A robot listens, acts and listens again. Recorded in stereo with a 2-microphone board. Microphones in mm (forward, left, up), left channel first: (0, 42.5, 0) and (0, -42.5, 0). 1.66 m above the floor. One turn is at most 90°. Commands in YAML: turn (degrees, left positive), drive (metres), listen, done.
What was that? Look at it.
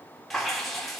turn: 30
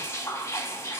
turn: 90
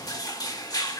turn: 45
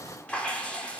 turn: 15
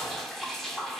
done: "Facing the dripping."